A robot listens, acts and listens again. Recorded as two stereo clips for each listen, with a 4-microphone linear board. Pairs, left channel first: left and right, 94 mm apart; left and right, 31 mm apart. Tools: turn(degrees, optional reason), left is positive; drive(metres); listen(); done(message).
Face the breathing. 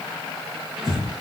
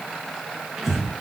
turn(degrees=-30)
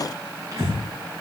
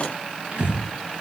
turn(degrees=-145, reason="So it is at 145° right.")
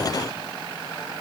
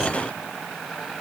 listen()
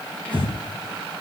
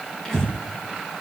turn(degrees=15, reason="The breathing is now 15° left.")
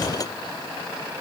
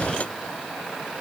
listen()
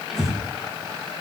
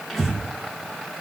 done("Facing the breathing, over 4 m away.")